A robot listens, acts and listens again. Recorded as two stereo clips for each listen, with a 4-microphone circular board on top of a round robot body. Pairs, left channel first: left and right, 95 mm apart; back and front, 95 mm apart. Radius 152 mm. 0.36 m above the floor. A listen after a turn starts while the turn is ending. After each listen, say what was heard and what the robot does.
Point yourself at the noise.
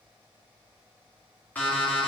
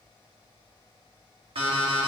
The alarm clock: 20° left. Turn 20° left.
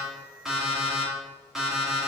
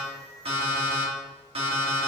Facing the alarm clock, 2 to 4 m away.